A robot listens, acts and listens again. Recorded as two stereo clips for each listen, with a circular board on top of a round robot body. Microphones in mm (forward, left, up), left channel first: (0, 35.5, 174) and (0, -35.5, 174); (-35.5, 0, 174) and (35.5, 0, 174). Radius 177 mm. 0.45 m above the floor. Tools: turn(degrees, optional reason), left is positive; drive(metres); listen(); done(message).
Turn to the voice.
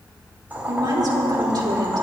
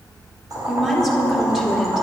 turn(degrees=-85, reason="The woman speaking: 85° right.")
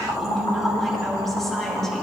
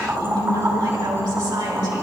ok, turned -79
done("Found it: a woman speaking, straight ahead.")